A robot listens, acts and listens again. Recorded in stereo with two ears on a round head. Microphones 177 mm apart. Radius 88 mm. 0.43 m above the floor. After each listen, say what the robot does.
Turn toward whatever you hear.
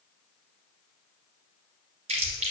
Turn 40° right.
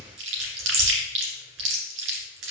Turn 105° right.
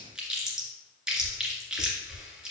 Found it: chewing, straight ahead, 2 to 4 m away.